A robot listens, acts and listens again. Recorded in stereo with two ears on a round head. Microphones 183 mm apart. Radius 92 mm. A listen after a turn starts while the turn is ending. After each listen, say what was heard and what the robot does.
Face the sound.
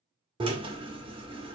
The drill: about 25° right or 155° right. Turn 25° right.
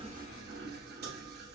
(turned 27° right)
So it is at 125° right. Turn 125° right.
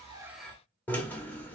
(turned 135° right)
The drill is now 10° left. Turn 10° left.
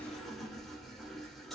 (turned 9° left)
Found it: a drill, straight ahead, under 1 m away.